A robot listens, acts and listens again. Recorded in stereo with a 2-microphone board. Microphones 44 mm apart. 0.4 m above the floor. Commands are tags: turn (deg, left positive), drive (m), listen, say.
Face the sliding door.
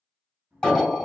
<turn deg="-40"/>
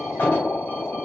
<listen/>
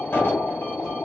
<listen/>
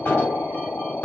<say>I heard a sliding door, but can't make it out now. It was about straight ahead or 100° right.</say>